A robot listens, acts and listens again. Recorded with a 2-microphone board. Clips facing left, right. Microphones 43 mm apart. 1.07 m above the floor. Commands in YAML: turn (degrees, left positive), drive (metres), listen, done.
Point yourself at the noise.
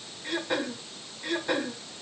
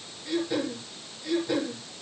turn: 60
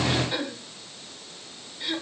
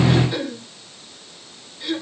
turn: 10
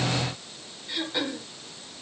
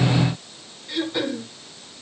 done: "Found it: throat clearing, straight ahead, 1 to 2 m away."